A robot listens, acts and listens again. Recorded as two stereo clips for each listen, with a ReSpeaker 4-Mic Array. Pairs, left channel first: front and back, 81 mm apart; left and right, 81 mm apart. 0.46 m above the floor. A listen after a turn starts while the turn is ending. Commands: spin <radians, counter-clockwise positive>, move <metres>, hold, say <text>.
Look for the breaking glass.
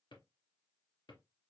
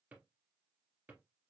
hold
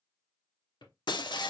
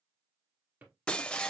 spin 0.26
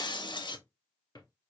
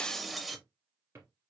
say Facing the breaking glass.